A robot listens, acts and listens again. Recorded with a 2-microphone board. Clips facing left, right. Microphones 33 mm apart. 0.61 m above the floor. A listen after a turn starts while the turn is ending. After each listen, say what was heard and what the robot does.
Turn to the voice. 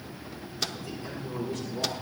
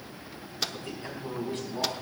The man speaking: about 40° right or 140° right. Turn 40° right.
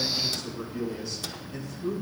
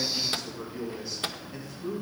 So it is at 10° right. Turn 10° right.
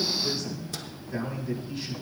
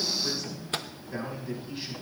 The man speaking is now 10° right. Turn 10° right.
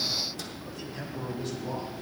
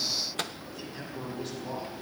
Facing the man speaking, over 4 m away.